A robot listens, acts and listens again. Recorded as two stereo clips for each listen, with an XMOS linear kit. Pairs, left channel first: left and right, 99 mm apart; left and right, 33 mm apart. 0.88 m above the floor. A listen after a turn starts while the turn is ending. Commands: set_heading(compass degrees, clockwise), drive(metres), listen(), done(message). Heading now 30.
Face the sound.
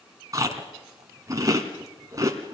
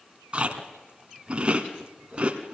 set_heading(65)
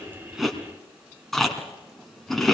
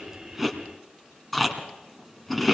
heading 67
done("Facing the chewing, 2 to 4 m away.")